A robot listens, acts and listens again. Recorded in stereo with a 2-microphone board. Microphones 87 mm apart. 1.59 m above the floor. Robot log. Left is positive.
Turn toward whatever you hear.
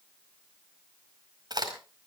note: The crack: about 50° right or 130° right.
cmd yaw -50
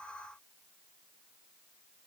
cmd idle
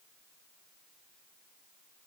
end: I heard a crack, but can't make it out now. It was about straight ahead or 80° right.